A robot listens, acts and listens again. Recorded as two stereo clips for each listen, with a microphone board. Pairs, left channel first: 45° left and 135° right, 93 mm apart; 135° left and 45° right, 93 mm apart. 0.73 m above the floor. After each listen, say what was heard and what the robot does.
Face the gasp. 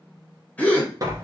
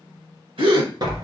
The gasp: 25° right. Turn 25° right.
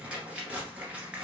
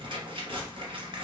Facing where the gasp came from. I can't hear it now.